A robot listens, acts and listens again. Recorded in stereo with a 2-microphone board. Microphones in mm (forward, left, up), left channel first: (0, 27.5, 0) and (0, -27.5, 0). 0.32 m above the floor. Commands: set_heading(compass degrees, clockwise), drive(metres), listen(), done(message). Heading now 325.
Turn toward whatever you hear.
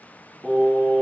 set_heading(295)
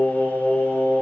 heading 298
set_heading(163)
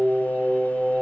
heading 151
set_heading(186)
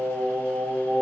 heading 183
done("Facing the singing.")